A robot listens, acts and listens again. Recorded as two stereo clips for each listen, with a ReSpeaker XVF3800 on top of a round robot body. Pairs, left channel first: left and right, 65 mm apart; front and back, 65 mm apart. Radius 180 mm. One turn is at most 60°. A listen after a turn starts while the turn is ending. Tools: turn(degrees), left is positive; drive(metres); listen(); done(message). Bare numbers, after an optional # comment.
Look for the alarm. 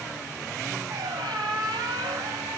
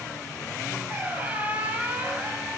listen()
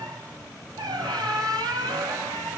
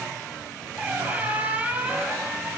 listen()
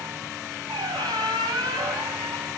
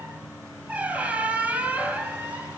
done("I can't make out an alarm to turn to.")